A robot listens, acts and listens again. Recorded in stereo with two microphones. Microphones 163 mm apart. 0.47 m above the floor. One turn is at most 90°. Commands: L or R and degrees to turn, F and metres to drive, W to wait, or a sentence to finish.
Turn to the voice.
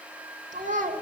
R55
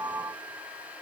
W
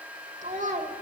R60
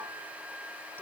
W
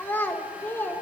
L10
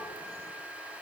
W
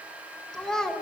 Facing the child speaking.